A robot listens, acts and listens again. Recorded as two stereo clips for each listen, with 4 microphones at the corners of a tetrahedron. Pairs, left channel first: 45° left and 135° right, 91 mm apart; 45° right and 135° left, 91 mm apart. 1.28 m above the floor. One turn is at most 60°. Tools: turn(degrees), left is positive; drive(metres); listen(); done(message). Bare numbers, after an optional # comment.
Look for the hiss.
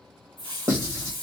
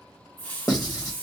# The hiss: 25° left.
turn(25)
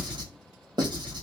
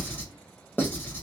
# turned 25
listen()
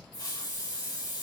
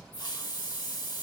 done("Found it: a hiss, straight ahead.")